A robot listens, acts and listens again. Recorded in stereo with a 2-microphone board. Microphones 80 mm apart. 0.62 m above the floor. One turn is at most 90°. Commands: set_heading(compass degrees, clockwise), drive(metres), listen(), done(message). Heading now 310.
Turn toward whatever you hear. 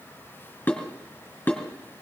set_heading(285)
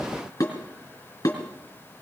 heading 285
set_heading(195)
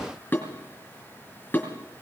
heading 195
set_heading(165)
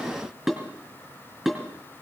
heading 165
done("Facing the dishes clattering.")